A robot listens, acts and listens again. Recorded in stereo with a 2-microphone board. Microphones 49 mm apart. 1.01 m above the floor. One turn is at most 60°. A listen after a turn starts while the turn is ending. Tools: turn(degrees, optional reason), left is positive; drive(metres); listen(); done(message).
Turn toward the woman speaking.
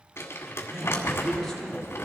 turn(degrees=30)
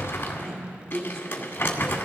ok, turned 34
turn(degrees=-25, reason="So it is at 25° right.")
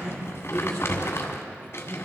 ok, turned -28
turn(degrees=10, reason="The woman speaking is now 10° left.")
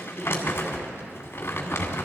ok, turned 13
done("Found it: a woman speaking, straight ahead.")